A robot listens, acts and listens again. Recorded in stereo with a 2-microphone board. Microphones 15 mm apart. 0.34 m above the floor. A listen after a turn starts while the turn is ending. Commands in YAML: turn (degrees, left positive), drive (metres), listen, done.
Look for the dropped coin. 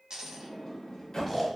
turn: -65
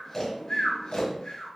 listen: true
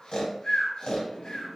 done: "I heard a dropped coin, but can't make it out now. It was about straight ahead or 50° right."